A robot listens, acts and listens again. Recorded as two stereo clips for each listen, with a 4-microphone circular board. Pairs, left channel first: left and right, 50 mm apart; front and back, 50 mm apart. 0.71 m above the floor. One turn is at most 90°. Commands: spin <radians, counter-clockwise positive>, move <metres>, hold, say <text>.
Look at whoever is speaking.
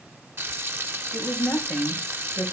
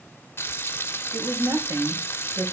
spin 1.57
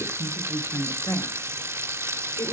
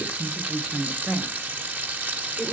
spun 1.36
spin 1.57
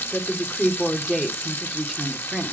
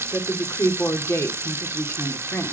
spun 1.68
say Found it: a woman speaking, straight ahead, 2 to 4 m away.